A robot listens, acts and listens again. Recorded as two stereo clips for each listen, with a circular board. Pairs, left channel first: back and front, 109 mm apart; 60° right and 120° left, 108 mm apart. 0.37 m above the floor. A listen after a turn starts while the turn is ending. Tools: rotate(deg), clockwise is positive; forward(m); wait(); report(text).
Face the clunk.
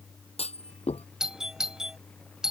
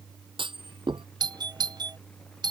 rotate(-160)
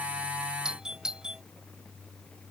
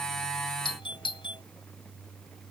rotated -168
report("Facing where the clunk came from. I can't hear it now.")